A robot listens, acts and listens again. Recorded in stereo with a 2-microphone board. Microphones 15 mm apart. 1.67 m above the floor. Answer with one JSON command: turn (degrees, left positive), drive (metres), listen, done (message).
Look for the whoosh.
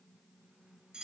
{"listen": true}
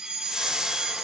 {"turn": -75}
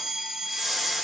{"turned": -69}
{"done": "Facing the whoosh."}